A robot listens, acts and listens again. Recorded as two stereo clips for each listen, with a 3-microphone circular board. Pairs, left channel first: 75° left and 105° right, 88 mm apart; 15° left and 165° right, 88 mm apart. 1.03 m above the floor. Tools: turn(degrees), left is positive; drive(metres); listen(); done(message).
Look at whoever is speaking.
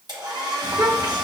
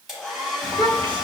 turn(degrees=-145)
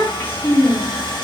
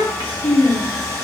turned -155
turn(degrees=10)
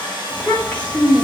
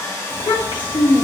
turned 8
done("Found it: a child speaking, straight ahead, 1 to 2 m away.")